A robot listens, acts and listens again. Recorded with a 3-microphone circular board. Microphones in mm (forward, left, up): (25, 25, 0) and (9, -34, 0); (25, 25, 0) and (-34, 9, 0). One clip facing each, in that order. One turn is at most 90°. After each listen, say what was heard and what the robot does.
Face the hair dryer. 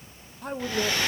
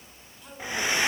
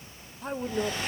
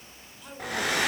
The hair dryer: 175° right. Turn 90° right.
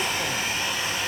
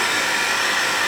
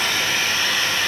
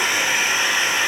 The hair dryer is now 95° right. Turn 90° right.
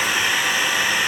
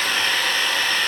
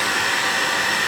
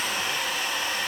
Facing the hair dryer.